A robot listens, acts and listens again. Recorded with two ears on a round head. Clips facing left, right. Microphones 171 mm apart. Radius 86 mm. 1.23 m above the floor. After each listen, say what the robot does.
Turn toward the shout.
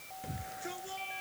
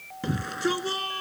Turn 90° right.
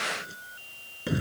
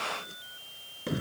Found it: a shout, straight ahead.